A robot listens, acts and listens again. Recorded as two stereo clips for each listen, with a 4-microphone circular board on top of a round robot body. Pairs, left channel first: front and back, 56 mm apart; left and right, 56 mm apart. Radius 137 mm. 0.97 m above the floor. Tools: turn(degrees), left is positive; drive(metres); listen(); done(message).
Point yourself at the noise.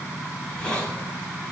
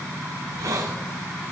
turn(degrees=-75)
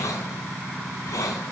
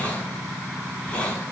turn(degrees=20)
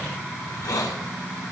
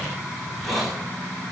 done("Facing the hiss.")